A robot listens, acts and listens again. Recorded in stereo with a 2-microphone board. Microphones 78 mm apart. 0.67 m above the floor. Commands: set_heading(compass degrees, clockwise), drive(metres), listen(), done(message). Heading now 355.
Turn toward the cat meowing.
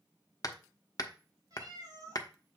set_heading(40)
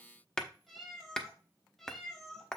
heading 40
done("Facing the cat meowing, 1 to 2 m away.")